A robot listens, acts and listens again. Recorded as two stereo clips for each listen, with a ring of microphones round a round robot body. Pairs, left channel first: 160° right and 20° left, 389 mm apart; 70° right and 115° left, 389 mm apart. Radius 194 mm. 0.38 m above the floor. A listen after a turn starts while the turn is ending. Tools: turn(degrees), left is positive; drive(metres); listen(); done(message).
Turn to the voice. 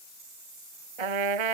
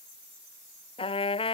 listen()
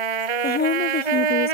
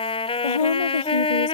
turn(degrees=-90)
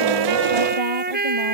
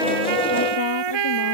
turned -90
listen()
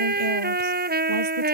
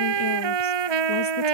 listen()
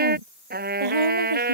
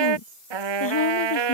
turn(degrees=-10)
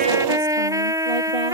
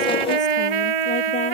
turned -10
listen()
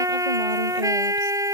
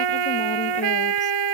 listen()
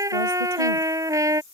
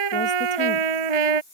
done("Facing where the woman speaking came from. I can't hear it now.")